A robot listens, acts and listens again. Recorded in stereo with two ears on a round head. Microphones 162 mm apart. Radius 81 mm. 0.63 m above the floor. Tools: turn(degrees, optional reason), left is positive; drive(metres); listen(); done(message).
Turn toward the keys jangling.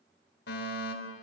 listen()
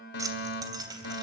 turn(degrees=-20, reason="The keys jangling: about 20° right or 160° right.")
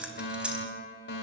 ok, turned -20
turn(degrees=-30)
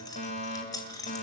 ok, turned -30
turn(degrees=20, reason="So it is at 20° left.")
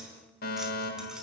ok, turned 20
listen()
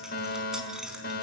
done("Found it: keys jangling, straight ahead.")